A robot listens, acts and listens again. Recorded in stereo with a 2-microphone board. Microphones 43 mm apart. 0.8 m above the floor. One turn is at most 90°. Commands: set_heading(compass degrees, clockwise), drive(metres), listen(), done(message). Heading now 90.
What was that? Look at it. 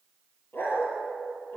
set_heading(30)
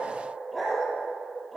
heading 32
done("Facing the dog barking.")